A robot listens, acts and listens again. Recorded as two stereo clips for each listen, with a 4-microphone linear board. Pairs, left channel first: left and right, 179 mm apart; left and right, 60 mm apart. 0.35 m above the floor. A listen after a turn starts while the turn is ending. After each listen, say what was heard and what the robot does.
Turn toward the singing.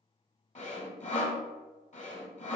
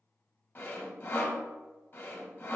Keep listening.
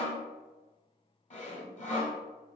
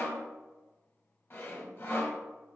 Keep listening.
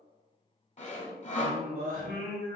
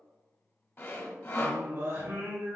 The singing: about 45° right or 135° right. Turn 45° right.
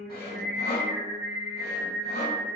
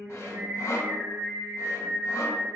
So it is at 70° right. Turn 70° right.
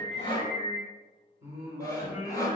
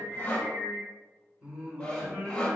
The singing is now 20° right. Turn 20° right.
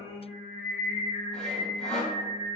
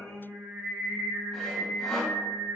Found it: singing, straight ahead, 2 to 4 m away.